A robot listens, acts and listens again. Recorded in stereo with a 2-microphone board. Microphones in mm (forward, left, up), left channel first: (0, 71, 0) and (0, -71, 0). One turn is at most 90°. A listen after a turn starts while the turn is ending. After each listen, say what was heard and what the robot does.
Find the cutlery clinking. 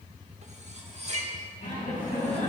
The cutlery clinking: about 50° right or 130° right. Turn 50° right.
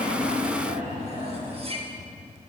So it is at 60° right. Turn 60° right.
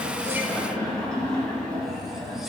Keep listening.
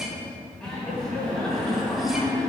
Keep listening.
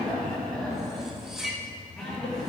Facing the cutlery clinking, under 1 m away.